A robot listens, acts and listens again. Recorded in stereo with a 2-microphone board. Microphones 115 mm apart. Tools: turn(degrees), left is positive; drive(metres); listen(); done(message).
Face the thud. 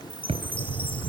turn(degrees=-65)
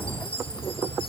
listen()
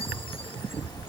done("I heard a thud, but can't make it out now. It was about straight ahead or 50° right.")